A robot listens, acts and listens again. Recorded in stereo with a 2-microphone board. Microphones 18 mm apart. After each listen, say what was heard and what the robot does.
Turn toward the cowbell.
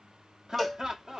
Turn 30° left.
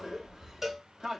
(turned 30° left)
So it is at 25° right. Turn 25° right.
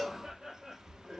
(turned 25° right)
The cowbell is now 20° right. Turn 20° right.
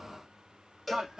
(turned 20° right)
Facing the cowbell.